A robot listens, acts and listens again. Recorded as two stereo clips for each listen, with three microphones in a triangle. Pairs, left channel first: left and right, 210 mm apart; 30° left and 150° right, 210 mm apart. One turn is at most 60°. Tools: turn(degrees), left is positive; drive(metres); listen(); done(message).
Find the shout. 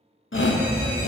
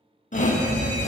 turn(degrees=60)
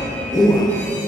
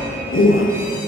turn(degrees=20)
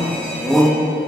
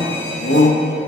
done("Found it: a shout, straight ahead, under 1 m away.")